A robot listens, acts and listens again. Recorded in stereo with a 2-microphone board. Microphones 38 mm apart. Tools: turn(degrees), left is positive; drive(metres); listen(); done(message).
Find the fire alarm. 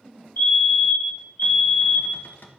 turn(degrees=90)
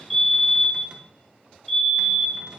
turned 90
done("Facing the fire alarm.")